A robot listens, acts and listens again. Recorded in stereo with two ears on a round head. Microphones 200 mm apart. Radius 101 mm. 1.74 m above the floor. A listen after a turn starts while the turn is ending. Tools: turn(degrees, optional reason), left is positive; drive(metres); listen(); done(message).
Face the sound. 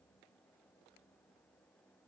listen()
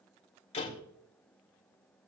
turn(degrees=30, reason="The door slam: about 30° left or 150° left.")
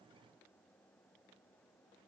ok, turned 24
listen()
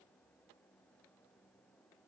done("I heard a door slam, but can't make it out now. It was about 5° left or 125° left.")